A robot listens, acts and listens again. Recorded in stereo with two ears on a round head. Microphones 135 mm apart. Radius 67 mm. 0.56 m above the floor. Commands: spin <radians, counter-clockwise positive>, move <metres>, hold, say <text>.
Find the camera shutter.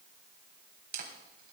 spin -1.22
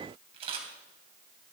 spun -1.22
spin -0.70
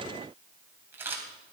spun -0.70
spin -0.26
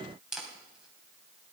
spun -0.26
say Found it: a camera shutter, straight ahead, 2 to 4 m away.